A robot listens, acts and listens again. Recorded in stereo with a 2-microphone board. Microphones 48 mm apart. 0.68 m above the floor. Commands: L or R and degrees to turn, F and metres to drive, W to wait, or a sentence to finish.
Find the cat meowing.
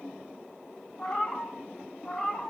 L15
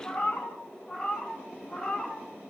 L15
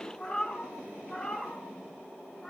L20
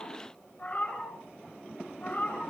L35
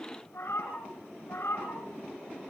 L110
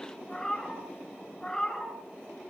L10
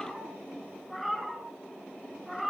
Found it: a cat meowing, straight ahead.